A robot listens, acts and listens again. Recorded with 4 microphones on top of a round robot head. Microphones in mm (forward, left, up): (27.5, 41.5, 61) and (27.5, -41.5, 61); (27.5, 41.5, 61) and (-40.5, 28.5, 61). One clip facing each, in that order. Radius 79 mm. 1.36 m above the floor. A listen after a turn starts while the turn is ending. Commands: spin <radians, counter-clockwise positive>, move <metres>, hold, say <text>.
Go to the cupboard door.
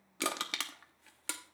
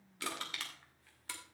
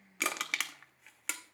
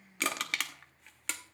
hold
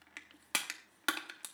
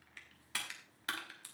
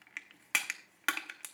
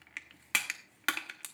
hold
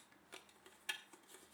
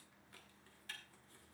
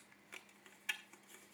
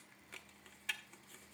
say I can't make out a cupboard door to turn to.